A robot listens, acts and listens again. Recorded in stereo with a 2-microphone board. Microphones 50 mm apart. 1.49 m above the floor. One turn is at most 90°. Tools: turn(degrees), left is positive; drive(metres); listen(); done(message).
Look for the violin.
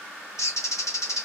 listen()
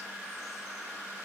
listen()
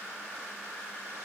done("I can't make out a violin to turn to.")